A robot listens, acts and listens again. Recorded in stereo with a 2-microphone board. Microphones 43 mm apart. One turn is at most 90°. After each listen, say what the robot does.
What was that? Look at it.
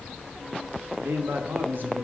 Turn 55° right.
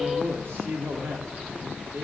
Turn 70° right.
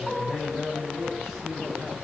Keep listening.
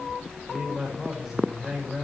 Turn 10° right.
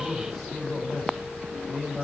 Facing the man speaking.